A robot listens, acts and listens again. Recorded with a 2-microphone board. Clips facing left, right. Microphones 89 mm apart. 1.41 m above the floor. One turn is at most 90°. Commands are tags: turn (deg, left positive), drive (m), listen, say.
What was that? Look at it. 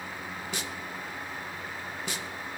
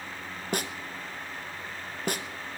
<turn deg="-50"/>
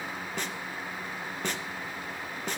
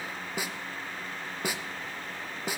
<turn deg="-10"/>
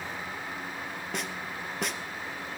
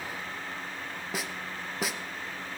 <say>Facing the snare drum.</say>